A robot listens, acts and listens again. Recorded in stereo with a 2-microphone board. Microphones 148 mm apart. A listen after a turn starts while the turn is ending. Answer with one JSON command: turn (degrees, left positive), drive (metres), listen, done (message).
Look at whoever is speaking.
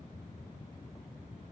{"listen": true}
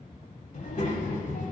{"turn": 60}
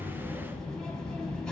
{"done": "Found it: a child speaking, straight ahead, 1 to 2 m away."}